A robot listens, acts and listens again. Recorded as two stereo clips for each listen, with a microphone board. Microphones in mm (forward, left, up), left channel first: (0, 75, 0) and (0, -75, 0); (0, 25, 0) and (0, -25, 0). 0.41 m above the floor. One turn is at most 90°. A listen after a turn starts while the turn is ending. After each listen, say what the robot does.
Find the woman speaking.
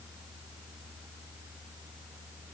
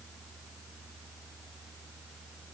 Keep listening.
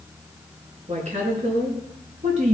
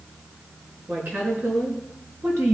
Turn 55° right.
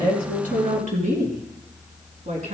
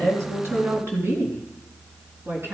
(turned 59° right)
Turn 55° right.
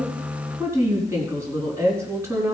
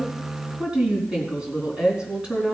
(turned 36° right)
Turn 20° right.
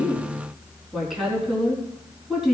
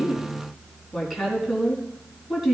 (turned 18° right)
Found it: a woman speaking, straight ahead.